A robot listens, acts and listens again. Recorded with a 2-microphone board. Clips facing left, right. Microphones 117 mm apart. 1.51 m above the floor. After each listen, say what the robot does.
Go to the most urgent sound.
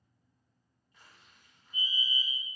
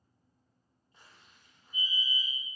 Turn 90° left.
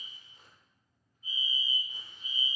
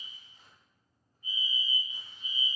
Drive 1.0 m forward.
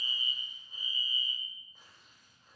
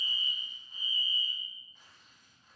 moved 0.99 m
Turn 10° left.
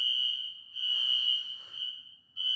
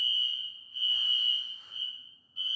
Drive 1.0 m forward.
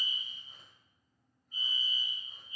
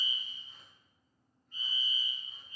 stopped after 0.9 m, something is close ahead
I am next to the fire alarm.